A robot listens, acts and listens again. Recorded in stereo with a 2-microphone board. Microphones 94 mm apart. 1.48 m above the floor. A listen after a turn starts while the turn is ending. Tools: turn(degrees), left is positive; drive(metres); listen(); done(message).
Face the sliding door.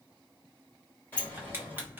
turn(degrees=20)
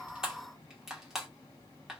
listen()
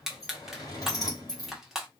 turn(degrees=140)
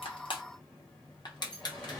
turn(degrees=10)
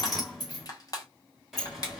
done("Facing the sliding door.")